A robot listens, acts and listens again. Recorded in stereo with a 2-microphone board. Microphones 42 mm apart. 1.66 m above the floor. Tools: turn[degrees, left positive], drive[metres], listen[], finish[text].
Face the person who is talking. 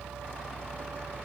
Action: listen[]
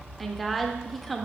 Action: turn[30]
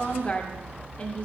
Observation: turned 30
Thought: So it is at 150° left.
Action: turn[150]
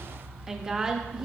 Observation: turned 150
Thought: The woman speaking is now 15° right.
Action: turn[-15]
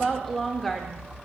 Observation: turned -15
Action: finish[Found it: a woman speaking, straight ahead.]